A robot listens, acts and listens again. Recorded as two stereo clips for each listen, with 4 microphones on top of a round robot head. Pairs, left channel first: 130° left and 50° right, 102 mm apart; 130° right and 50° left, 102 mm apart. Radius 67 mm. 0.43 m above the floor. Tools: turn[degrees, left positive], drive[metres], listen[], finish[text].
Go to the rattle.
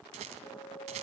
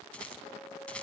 Thought: The rattle: 50° right.
Action: turn[-50]
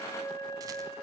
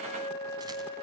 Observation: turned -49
Action: listen[]
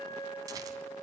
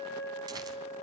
Action: listen[]
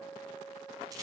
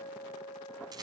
Action: finish[Facing where the rattle came from. I can't hear it now. I did not reach it.]